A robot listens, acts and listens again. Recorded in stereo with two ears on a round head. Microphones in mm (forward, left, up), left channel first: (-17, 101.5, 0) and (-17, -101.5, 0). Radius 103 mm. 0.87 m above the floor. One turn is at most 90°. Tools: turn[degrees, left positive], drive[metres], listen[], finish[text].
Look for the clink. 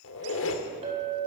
Thought: The clink: about 30° right or 150° right.
Action: turn[-30]
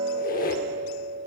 Thought: So it is at 120° right.
Action: turn[-90]
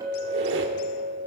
Thought: The clink is now 15° right.
Action: turn[-15]
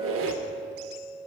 Action: finish[Facing the clink.]